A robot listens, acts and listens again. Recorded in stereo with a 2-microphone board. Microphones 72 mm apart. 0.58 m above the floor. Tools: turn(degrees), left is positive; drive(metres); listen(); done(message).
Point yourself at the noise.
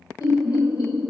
turn(degrees=60)
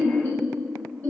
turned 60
turn(degrees=20)
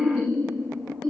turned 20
done("Found it: laughter, straight ahead.")